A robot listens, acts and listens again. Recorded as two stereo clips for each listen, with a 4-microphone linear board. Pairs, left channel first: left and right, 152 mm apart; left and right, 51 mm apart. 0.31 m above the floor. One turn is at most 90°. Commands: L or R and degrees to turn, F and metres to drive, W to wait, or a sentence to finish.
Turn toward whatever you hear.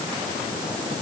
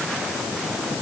W
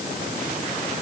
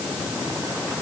W
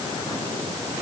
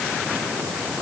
I can't make out anything to turn to.